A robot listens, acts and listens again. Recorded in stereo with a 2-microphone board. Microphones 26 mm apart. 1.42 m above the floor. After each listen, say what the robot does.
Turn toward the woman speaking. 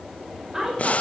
Turn 20° right.
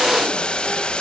Keep listening.
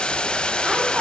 Keep listening.
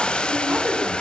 Turn 130° right.
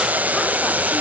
Keep listening.
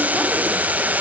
Keep listening.
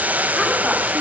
Facing where the woman speaking came from. I can't hear it now.